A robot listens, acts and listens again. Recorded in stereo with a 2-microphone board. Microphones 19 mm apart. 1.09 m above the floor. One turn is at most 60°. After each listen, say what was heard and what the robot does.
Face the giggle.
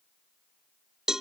Keep listening.
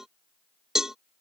Keep listening.
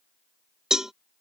I can't make out a giggle to turn to.